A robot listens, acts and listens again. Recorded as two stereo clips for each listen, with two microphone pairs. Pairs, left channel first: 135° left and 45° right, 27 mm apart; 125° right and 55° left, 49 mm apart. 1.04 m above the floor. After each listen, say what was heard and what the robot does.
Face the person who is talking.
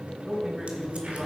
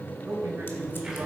The man speaking: 25° left. Turn 25° left.
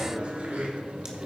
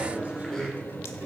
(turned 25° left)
Keep listening.
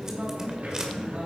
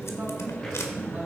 Facing the man speaking.